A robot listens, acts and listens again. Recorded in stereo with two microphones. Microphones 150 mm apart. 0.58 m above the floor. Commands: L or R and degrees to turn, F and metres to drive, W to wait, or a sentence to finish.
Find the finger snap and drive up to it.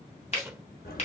L50
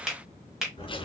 F1.0
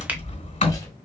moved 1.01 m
W
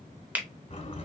R10
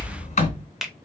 F1.0
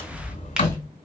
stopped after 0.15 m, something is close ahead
W
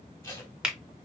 Arrived at the finger snap, straight ahead.